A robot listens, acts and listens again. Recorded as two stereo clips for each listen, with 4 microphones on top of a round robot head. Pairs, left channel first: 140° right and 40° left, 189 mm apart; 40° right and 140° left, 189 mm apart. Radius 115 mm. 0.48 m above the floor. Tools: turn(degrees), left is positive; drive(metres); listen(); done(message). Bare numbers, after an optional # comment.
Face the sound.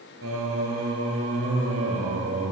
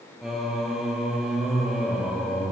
# The singing: 50° left.
turn(50)
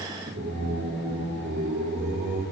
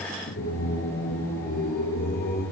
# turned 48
done("Found it: singing, straight ahead, 1 to 2 m away.")